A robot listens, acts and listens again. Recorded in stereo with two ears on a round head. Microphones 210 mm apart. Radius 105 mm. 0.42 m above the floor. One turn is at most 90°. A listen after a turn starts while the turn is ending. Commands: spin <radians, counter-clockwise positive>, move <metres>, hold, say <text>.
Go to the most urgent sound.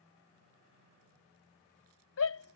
spin 1.13
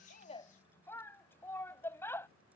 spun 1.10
spin 0.17
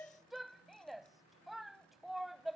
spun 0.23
move 1.0
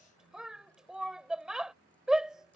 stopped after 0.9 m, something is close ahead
say I am next to the shout.